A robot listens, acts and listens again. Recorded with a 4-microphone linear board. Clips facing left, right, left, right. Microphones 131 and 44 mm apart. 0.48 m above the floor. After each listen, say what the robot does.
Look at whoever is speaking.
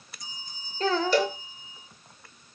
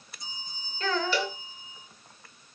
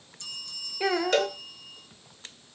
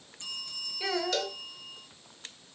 Turn 35° left.
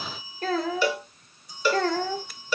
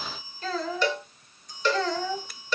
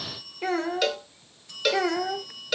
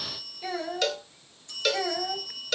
Turn 105° left.
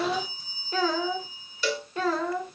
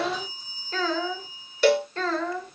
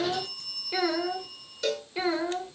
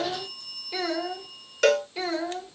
Turn 15° left.
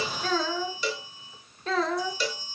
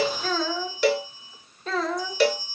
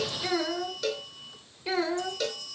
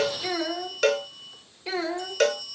Found it: a child speaking, straight ahead, 1 to 2 m away.